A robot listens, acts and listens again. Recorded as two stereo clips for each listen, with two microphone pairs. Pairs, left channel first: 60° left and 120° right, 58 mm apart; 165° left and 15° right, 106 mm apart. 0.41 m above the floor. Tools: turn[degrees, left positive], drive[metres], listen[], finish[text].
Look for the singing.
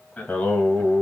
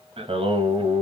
Action: finish[Facing the singing, 1 to 2 m away.]